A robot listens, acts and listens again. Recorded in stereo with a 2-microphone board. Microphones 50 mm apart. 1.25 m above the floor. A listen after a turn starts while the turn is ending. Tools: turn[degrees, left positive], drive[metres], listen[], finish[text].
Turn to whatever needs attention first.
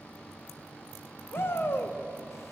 Thought: The shout: about 50° left or 130° left.
Action: turn[50]
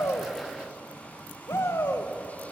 Thought: So it is at 75° left.
Action: turn[75]
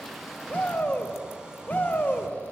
Thought: The shout is now 35° left.
Action: turn[35]
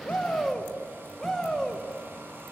Action: finish[Facing the shout, 1 to 2 m away.]